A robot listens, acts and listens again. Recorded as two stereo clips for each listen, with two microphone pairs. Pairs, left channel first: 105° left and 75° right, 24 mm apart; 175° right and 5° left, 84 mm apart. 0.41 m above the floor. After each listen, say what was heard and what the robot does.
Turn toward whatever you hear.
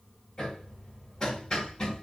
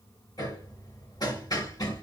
The hammering: 160° left. Turn 160° left.
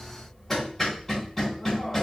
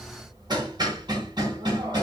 The hammering is now 25° left. Turn 25° left.
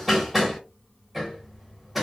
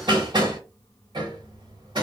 The hammering is now 10° left. Turn 10° left.
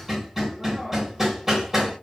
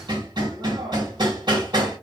Found it: hammering, straight ahead.